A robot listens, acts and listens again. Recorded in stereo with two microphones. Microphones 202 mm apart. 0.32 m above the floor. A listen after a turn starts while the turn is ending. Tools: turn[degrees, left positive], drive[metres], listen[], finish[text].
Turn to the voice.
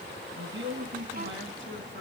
Thought: The man speaking: about 70° right or 110° right.
Action: turn[-70]
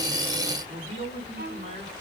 Thought: So it is at 35° right.
Action: turn[-35]
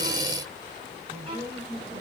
Thought: The man speaking is now 15° right.
Action: turn[-15]
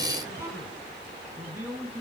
Action: finish[Facing the man speaking, over 4 m away.]